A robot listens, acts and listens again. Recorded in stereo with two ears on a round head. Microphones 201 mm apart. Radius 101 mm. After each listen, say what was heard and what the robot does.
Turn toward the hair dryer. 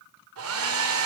The hair dryer: about 70° right or 110° right. Turn 70° right.
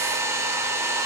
So it is at 15° right. Turn 15° right.
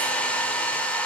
Found it: a hair dryer, straight ahead.